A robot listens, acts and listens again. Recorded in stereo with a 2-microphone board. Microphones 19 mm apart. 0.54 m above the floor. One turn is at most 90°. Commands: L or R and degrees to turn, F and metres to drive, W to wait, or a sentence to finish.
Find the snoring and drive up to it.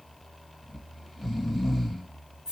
R30
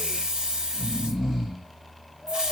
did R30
R90
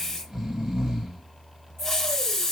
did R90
R30
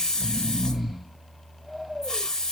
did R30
F1.0
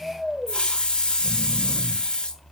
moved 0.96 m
R20
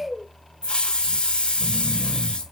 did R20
F1.0
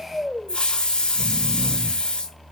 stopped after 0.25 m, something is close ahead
Arrived at the snoring, straight ahead.